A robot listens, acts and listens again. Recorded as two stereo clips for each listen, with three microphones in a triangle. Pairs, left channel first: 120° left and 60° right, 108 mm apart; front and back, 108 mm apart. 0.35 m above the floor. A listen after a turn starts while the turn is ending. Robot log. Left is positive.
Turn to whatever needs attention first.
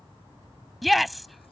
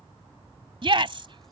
note: The shout: 150° right.
cmd yaw -150
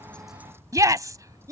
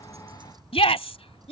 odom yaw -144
end: Found it: a shout, straight ahead.